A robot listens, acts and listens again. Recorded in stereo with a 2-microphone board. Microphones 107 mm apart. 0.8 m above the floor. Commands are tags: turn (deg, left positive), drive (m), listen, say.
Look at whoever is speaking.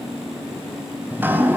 <listen/>
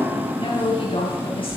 <turn deg="55"/>
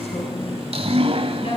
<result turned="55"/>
<turn deg="70"/>
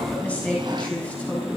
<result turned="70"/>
<turn deg="15"/>
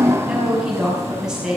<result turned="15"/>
<say>Found it: a woman speaking, straight ahead.</say>